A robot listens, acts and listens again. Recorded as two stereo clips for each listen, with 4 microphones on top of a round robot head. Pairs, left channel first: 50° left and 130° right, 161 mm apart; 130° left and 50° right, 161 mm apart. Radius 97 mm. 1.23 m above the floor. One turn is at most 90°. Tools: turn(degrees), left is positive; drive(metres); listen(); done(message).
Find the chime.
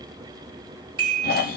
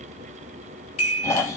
turn(degrees=90)
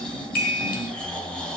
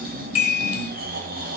turn(degrees=80)
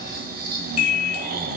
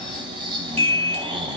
done("Facing the chime.")